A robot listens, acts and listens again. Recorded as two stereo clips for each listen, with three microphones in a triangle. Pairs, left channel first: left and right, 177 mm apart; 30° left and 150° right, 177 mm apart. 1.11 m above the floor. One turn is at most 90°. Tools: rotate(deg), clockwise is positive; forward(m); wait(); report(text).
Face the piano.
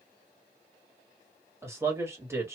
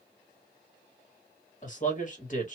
wait()
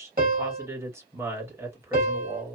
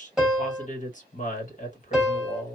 rotate(60)
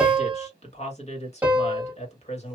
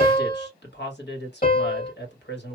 report("Found it: a piano, straight ahead, 1 to 2 m away.")